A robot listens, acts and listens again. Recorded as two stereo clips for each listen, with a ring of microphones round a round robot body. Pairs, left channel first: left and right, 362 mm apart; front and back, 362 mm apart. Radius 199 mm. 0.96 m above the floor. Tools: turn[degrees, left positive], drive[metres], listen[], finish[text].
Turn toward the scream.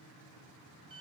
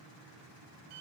Action: listen[]
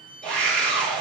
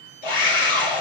Action: finish[Facing the scream.]